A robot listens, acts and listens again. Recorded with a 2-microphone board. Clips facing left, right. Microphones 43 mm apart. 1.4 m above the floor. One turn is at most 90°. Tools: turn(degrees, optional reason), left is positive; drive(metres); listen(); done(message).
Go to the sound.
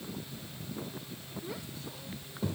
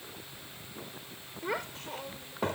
turn(degrees=-60, reason="The child speaking: about 60° right or 120° right.")
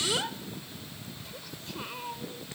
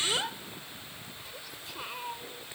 drive(metres=1.0)
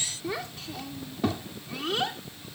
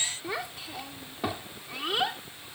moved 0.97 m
turn(degrees=-10, reason="The child speaking is now 10° right.")
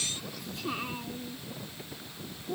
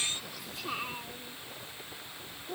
drive(metres=1.0)
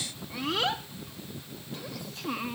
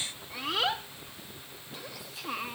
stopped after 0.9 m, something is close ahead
done("I am next to the child speaking.")